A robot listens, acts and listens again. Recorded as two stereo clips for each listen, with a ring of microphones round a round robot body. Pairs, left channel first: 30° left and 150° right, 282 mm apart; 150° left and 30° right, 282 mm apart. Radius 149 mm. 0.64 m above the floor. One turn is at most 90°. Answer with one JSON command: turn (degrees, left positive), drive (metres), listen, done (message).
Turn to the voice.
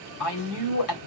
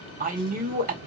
{"turn": 30}
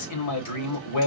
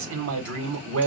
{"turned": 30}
{"turn": 10}
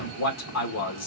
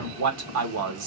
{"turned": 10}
{"done": "Facing the man speaking."}